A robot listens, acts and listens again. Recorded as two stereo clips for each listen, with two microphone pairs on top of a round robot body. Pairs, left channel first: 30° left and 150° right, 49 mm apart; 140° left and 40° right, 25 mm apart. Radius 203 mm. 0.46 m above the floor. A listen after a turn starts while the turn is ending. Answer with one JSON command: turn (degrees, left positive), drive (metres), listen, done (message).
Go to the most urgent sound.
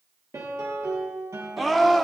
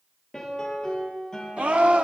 {"turn": -60}
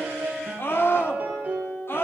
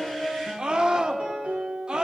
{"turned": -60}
{"drive": 1.0}
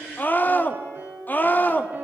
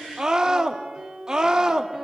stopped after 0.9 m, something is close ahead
{"done": "I am next to the scream."}